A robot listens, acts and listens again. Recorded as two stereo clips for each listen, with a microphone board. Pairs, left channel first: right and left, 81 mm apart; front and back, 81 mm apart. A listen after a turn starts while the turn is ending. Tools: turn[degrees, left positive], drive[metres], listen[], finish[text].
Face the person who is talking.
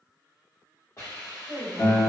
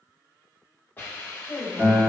Thought: The woman speaking: 50° left.
Action: turn[50]
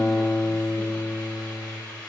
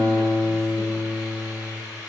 Action: listen[]
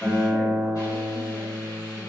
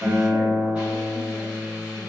Action: listen[]
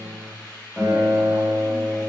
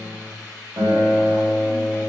Action: finish[Facing where the woman speaking came from. I can't hear it now.]